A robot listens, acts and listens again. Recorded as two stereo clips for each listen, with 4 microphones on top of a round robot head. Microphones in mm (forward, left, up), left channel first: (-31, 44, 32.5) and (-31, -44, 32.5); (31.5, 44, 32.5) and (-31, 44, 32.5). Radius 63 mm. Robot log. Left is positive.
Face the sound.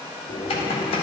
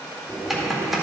note: The typing on a keyboard: 95° left.
cmd yaw +95
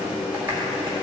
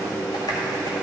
note: The typing on a keyboard is now 20° right.
cmd yaw -20
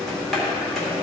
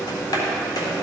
end: Found it: typing on a keyboard, straight ahead, 1 to 2 m away.